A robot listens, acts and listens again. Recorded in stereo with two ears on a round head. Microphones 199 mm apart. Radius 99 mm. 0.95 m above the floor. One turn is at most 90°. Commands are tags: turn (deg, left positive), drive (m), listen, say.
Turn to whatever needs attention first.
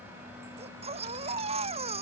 <turn deg="-30"/>
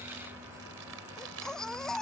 <say>Facing the baby crying.</say>